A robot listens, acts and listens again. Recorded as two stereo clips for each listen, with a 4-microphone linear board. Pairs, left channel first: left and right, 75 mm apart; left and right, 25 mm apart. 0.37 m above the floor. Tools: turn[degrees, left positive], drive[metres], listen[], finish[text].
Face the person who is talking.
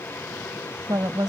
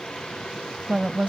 Thought: The woman speaking: about 60° right or 120° right.
Action: turn[-60]
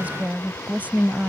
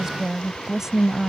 Thought: So it is at 25° right.
Action: turn[-25]
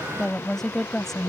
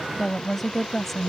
Action: finish[Found it: a woman speaking, straight ahead.]